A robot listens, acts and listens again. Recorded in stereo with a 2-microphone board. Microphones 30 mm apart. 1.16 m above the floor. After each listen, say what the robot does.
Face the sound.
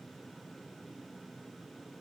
Keep listening.
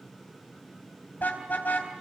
Turn 90° left.
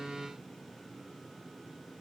Keep listening.
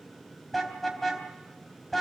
Turn 10° left.
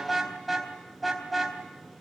Found it: a car horn, straight ahead, 2 to 4 m away.